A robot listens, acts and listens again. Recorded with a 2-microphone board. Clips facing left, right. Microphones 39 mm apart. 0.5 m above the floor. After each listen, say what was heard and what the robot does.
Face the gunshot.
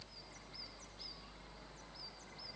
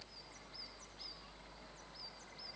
Keep listening.
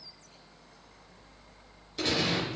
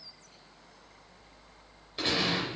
The gunshot: about 20° right or 160° right. Turn 20° right.
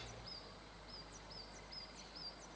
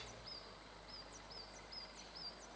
Keep listening.
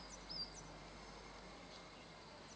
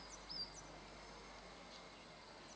I heard a gunshot, but can't make it out now. It was about straight ahead or 140° right.